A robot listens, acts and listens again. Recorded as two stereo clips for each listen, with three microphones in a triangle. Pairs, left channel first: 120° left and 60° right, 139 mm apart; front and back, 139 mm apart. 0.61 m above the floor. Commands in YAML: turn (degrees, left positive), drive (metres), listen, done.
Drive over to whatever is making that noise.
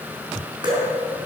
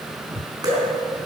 turn: -120
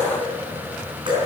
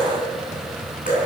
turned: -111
turn: -10
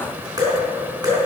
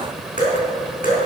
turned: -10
drive: 1.0
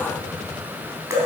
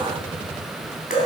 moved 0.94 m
drive: 1.0
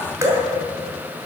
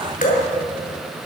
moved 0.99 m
turn: 10
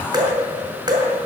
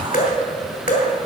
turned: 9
drive: 1.0
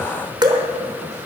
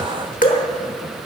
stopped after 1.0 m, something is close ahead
done: "Arrived at the dripping, straight ahead."